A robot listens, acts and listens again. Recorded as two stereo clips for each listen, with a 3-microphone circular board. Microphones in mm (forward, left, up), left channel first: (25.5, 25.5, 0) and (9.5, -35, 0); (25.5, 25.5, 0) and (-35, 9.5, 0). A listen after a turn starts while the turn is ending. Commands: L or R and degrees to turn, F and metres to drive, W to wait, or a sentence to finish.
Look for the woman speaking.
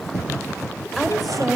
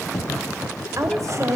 L165
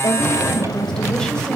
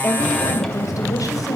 Found it: a woman speaking, straight ahead, 2 to 4 m away.